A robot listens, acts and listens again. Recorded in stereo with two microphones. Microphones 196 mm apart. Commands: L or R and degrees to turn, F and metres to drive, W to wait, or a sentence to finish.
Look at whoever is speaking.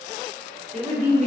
R35
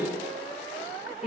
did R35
Facing the woman speaking.